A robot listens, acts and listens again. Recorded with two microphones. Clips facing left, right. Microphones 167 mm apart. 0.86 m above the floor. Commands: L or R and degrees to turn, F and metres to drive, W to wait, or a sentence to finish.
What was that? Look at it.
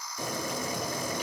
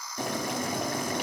R65
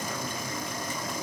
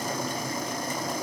R40
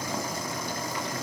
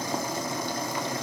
R20
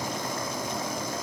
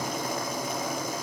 Found it: boiling, straight ahead.